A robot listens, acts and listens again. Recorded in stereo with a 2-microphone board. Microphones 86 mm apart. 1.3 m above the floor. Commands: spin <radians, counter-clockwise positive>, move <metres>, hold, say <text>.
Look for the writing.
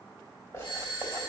spin 0.61
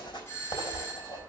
spin 1.92
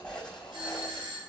say Facing the writing.